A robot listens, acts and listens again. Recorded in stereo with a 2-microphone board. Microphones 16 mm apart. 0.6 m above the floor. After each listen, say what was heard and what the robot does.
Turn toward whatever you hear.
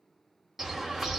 The bird: about 20° right or 160° right. Turn 20° right.
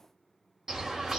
So it is at 135° right. Turn 135° right.
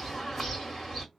The bird is now 15° left. Turn 15° left.
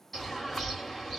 Facing the bird, 1 to 2 m away.